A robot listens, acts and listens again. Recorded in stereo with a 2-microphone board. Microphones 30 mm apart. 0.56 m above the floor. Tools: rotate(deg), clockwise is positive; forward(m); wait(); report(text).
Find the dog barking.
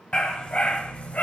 rotate(-50)
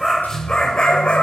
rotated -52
rotate(-45)
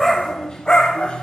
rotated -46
rotate(-35)
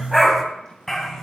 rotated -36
rotate(-15)
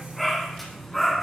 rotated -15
report("Facing the dog barking.")